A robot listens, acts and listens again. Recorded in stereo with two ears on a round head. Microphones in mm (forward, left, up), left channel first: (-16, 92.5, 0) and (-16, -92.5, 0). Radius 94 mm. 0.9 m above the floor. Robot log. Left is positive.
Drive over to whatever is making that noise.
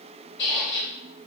note: The squeak: about 50° left or 130° left.
cmd yaw +50
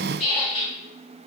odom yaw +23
note: So it is at 25° left.
cmd yaw +25
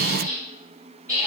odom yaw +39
note: The squeak is now 15° right.
cmd yaw -15
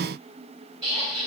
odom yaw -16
cmd fwd 1.0
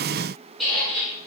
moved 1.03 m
cmd fwd 1.0
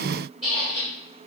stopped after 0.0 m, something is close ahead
end: I am next to the squeak.